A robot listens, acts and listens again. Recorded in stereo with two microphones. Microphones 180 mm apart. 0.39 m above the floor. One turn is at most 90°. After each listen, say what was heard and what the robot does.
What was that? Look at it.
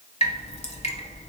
The dripping: about 35° left or 145° left. Turn 35° left.
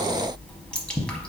Found it: dripping, straight ahead.